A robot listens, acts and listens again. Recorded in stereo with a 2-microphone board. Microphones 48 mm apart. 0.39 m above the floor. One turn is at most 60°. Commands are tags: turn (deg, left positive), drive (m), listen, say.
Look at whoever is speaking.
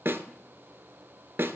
<listen/>
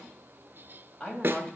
<turn deg="25"/>
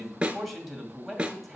<say>Facing the man speaking, 2 to 4 m away.</say>